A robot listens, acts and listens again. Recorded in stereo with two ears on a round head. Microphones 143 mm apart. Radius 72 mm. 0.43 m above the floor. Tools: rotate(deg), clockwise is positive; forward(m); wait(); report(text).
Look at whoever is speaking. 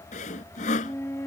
wait()
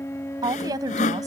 rotate(25)
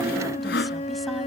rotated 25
wait()
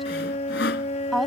report("Found it: a woman speaking, straight ahead.")